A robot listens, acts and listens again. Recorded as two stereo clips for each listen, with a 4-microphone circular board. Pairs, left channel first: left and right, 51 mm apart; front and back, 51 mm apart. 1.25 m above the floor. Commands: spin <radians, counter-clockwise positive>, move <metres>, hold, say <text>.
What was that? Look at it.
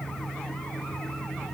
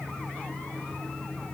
hold
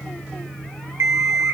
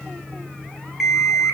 spin -1.66
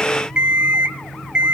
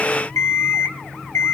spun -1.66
spin -0.35
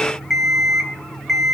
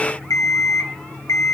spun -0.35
say Found it: an alarm clock, straight ahead, 2 to 4 m away.